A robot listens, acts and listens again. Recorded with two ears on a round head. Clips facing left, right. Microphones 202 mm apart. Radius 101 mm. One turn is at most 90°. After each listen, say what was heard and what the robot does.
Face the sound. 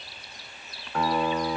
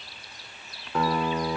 Turn 90° right.
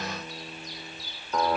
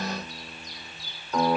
Facing the guitar, 2 to 4 m away.